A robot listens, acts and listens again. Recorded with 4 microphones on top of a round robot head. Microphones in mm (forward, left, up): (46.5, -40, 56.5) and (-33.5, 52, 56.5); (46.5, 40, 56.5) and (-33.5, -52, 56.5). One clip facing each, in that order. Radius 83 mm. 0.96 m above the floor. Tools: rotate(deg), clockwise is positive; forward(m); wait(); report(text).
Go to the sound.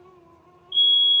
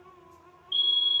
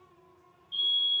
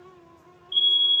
rotate(-155)
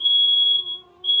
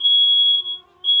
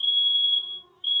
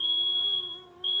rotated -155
rotate(-15)
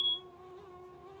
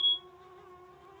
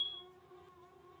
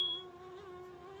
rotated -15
forward(1.0)
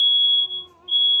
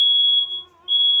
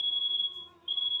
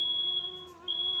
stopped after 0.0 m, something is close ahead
report("Something is in my way. I am facing the fire alarm but have not reached it.")